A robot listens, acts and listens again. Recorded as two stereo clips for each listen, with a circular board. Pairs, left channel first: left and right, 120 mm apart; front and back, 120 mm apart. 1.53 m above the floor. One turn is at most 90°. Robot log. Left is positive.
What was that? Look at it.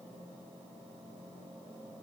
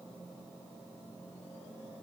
cmd idle
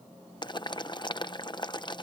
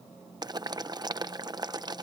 note: The boiling: 135° left.
cmd yaw +90
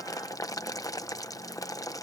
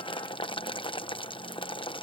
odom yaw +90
note: The boiling is now 35° left.
cmd yaw +35
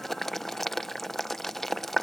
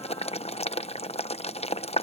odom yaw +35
end: Facing the boiling.